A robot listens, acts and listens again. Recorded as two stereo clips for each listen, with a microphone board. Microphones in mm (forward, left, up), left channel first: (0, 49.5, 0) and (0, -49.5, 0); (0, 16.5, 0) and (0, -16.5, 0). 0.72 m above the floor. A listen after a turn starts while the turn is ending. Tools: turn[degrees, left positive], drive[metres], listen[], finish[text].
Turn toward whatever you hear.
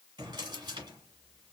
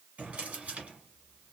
Thought: The drawer: about 50° right or 130° right.
Action: turn[-50]
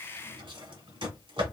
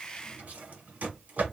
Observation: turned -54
Thought: So it is at 75° right.
Action: turn[-75]
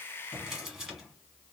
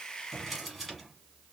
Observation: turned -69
Action: finish[Found it: a drawer, straight ahead, 1 to 2 m away.]